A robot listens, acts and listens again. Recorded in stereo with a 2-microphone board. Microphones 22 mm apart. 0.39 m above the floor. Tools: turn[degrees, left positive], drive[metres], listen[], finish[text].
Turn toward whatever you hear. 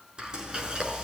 Thought: The frying: about 45° right or 135° right.
Action: turn[-45]
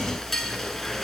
Action: finish[Found it: frying, straight ahead, over 4 m away.]